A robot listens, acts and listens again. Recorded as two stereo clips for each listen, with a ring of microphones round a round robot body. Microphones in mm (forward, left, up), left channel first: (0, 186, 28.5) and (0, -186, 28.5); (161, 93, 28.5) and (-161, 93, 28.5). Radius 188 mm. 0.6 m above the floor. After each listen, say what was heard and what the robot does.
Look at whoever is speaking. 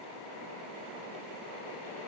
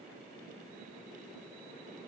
Keep listening.
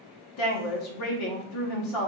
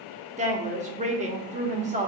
The woman speaking: 115° left. Turn 115° left.
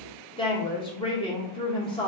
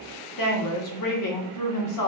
The woman speaking is now 15° left. Turn 15° left.
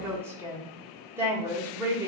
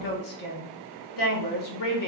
Facing the woman speaking.